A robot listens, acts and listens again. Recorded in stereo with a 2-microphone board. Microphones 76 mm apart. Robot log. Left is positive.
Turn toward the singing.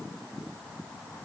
cmd idle
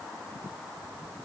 cmd idle
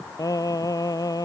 note: The singing: about 55° left or 125° left.
cmd yaw +55
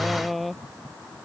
end: Facing the singing.